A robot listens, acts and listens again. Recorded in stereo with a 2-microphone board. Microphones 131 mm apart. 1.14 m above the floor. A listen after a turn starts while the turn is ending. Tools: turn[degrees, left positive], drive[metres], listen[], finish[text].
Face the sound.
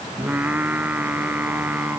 Action: turn[-30]
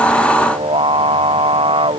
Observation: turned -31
Thought: So it is at 135° right.
Action: turn[-135]
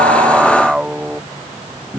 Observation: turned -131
Action: finish[Facing the singing.]